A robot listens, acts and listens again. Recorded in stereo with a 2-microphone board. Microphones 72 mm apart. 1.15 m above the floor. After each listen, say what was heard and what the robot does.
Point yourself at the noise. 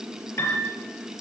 The piano: about 45° left or 135° left. Turn 45° left.
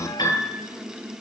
So it is at 90° left. Turn 90° left.
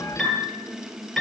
Facing the piano.